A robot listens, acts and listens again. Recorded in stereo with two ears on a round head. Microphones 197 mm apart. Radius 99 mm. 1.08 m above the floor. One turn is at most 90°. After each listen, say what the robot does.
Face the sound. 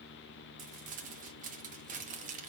Turn 40° right.
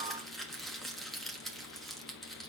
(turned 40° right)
Facing the crumpling, 1 to 2 m away.